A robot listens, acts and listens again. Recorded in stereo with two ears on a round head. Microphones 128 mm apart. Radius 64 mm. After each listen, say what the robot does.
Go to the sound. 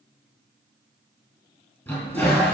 Turn 30° left.
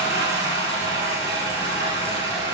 Turn 25° right.
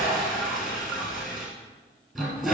Drive 1.0 m forward.
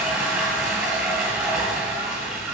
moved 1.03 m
Turn 10° right.
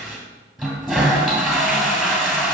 Drive 1.0 m forward.
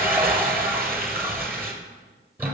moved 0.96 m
Turn 15° right.
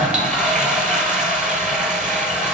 Drive 1.0 m forward.
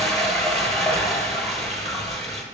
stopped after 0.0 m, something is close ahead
Arrived at the toilet flushing, straight ahead.